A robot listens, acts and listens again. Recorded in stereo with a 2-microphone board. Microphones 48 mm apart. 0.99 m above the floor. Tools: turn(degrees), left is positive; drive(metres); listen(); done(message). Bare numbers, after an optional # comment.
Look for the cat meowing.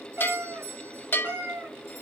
# The cat meowing: about 50° right or 130° right.
turn(-50)
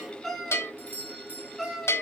done("Found it: a cat meowing, straight ahead.")